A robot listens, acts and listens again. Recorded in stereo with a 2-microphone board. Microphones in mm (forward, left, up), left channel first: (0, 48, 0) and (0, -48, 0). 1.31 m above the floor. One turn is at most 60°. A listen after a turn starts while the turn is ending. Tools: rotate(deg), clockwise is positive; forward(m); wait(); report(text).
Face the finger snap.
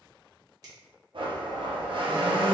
rotate(40)
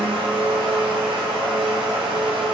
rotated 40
wait()
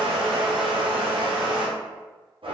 wait()
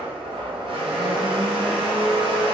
report("I heard a finger snap, but can't make it out now. It was about straight ahead or 100° right.")